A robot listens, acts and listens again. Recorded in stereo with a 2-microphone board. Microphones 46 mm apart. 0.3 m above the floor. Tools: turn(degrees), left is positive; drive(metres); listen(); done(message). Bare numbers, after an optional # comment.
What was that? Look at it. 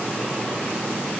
listen()
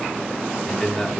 turn(30)
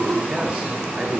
listen()
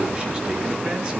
listen()
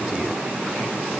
done("I heard a man speaking, but can't make it out now. It was about 25° right or 145° left.")